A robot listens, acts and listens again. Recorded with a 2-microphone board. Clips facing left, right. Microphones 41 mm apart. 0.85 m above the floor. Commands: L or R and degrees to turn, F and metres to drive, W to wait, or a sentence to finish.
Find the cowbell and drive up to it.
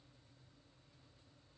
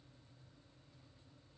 W
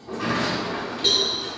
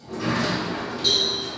L55
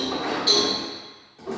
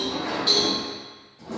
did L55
F1.0
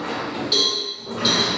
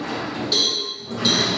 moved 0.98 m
L10
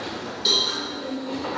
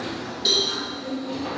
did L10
F1.0
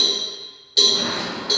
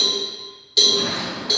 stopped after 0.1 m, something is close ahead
I am next to the cowbell.